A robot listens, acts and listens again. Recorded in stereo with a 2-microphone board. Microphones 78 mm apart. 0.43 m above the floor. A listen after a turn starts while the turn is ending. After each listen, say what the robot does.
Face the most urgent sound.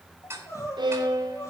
Turn 45° left.
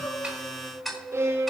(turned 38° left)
Turn 95° left.
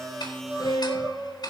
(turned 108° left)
Turn 15° right.
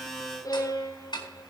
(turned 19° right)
Keep listening.
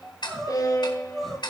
Found it: crying, straight ahead, over 4 m away.